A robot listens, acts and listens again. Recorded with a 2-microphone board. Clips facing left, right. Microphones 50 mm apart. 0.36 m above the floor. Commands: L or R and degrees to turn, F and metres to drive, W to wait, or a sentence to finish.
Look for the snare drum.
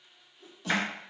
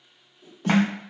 R40
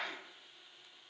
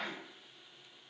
W
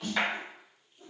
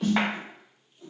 Found it: a snare drum, straight ahead.